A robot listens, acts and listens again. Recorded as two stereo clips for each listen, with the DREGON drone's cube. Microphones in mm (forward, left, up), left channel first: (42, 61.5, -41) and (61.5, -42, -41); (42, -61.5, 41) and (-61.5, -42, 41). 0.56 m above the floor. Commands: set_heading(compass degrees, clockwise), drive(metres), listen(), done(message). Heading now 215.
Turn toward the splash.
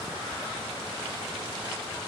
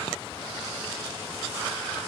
listen()
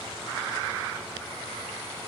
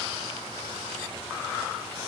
listen()
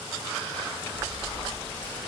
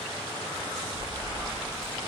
set_heading(185)
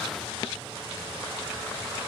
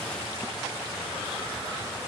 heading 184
done("Facing where the splash came from. I can't hear it now.")